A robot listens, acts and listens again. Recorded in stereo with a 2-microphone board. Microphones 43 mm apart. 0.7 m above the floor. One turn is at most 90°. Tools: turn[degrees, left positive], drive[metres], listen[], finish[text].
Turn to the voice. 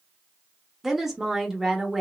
Action: turn[-30]
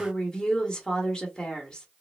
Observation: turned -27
Thought: So it is at 20° left.
Action: turn[20]
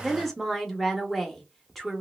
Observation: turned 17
Action: finish[Found it: a woman speaking, straight ahead, 1 to 2 m away.]